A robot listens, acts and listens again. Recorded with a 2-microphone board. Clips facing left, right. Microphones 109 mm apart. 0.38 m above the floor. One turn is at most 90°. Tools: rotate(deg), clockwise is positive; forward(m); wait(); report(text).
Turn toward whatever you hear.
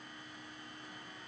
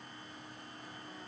wait()
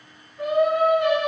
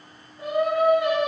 rotate(-70)
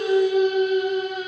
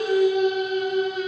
rotate(-45)
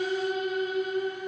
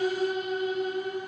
rotate(-35)
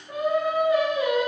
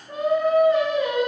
rotate(-10)
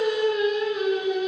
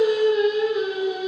report("Facing the singing, 2 to 4 m away.")